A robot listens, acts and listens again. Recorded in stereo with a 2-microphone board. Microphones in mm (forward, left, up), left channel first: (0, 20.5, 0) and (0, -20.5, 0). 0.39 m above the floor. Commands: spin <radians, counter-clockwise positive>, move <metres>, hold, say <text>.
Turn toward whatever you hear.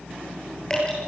spin 0.26
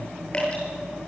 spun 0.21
spin 2.62
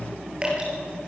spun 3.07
spin -0.44
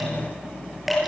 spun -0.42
say Facing the dripping, over 4 m away.